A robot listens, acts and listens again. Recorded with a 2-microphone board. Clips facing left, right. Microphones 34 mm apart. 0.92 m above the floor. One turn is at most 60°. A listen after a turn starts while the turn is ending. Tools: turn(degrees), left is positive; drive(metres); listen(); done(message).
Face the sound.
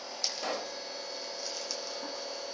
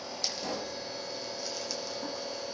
turn(degrees=60)
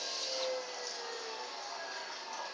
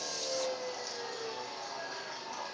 listen()
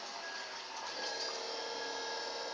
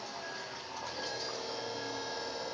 done("I heard a pop, but can't make it out now. It was about 5° left or 55° left.")